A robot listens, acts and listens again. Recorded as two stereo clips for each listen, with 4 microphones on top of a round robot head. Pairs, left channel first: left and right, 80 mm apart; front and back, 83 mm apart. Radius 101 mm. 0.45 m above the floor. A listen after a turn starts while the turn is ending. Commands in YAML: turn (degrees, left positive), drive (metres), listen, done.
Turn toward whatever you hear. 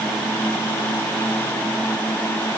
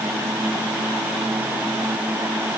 listen: true
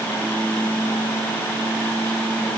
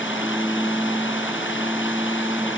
listen: true
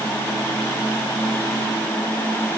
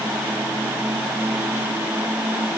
done: "I can't make out anything."